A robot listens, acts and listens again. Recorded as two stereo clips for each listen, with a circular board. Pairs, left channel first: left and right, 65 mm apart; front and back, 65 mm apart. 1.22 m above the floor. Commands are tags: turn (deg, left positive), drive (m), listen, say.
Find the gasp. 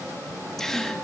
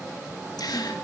<turn deg="10"/>
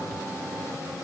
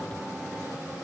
<say>I heard a gasp from this way, but can't make it out now.</say>